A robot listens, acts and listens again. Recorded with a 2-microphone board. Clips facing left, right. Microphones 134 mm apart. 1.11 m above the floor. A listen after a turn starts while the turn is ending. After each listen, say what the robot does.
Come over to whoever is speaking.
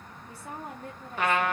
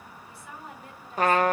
Turn 45° left.
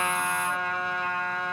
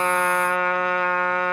Keep listening.
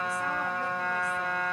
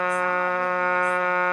Keep listening.
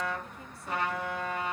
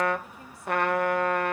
I heard a woman speaking, but can't make it out now. It was about straight ahead or 90° left. I did not reach it.